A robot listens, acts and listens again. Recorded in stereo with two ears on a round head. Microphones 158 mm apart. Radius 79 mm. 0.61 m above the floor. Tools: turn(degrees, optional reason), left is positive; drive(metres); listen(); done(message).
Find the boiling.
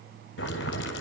turn(degrees=75, reason="The boiling: about 75° left or 105° left.")
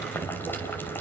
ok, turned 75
turn(degrees=10, reason="So it is at 10° left.")
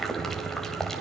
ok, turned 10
done("Facing the boiling, 2 to 4 m away.")